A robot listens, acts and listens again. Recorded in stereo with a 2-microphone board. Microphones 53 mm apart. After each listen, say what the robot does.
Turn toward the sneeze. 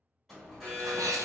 Turn 90° right.
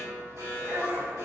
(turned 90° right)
I heard a sneeze from this way, but can't make it out now.